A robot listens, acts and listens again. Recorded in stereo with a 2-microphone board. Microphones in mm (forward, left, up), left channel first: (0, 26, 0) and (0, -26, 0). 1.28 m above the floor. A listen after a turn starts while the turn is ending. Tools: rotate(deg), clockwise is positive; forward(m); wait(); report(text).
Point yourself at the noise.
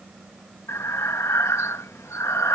rotate(-65)
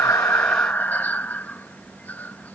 rotate(-35)
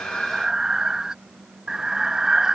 rotate(15)
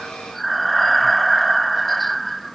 report("Found it: breathing, straight ahead.")